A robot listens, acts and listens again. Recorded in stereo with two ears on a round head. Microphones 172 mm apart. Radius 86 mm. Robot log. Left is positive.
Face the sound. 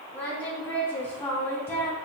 note: The singing: about 15° left or 165° left.
cmd yaw +15
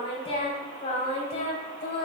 note: So it is at 135° left.
cmd yaw +135
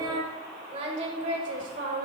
note: The singing is now 50° right.
cmd yaw -50
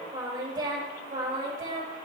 note: The singing is now 25° right.
cmd yaw -25
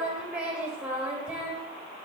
note: The singing is now 10° right.
cmd yaw -10
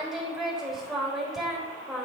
end: Facing the singing.